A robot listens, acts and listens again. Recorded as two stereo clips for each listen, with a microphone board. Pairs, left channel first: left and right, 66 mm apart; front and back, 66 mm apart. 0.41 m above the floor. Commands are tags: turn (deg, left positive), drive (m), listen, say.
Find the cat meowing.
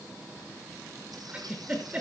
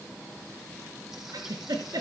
<listen/>
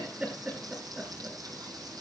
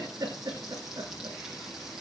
<listen/>
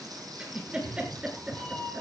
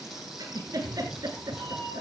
<turn deg="165"/>
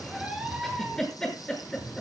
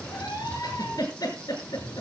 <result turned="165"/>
<turn deg="-15"/>
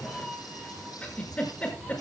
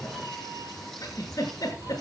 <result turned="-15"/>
<say>Facing the cat meowing, over 4 m away.</say>